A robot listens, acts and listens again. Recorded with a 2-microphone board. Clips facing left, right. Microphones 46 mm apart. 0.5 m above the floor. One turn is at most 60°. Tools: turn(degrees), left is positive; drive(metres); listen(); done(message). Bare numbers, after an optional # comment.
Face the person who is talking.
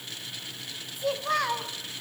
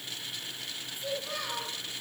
# The child speaking: about 75° left or 105° left.
turn(60)
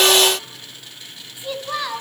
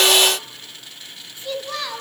# So it is at 15° left.
turn(15)
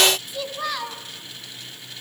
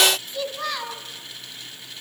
done("Facing the child speaking.")